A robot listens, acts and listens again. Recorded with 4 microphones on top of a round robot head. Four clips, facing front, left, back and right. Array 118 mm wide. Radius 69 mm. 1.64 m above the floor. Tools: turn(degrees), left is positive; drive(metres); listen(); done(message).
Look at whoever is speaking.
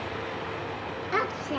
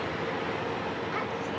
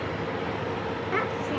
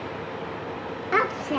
turn(degrees=-80)
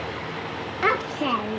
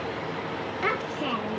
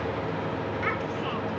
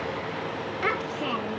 done("Facing the child speaking.")